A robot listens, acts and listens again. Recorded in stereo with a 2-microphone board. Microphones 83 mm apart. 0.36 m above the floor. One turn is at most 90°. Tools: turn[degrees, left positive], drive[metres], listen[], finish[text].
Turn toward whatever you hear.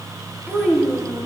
Thought: The child speaking: about 35° right or 145° right.
Action: turn[-35]
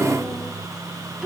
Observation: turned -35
Thought: So it is at 10° right.
Action: turn[-10]
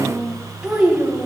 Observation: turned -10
Thought: The child speaking is now 20° right.
Action: turn[-20]
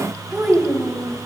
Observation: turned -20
Thought: The child speaking is now 15° right.
Action: turn[-15]
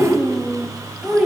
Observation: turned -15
Action: finish[Facing the child speaking.]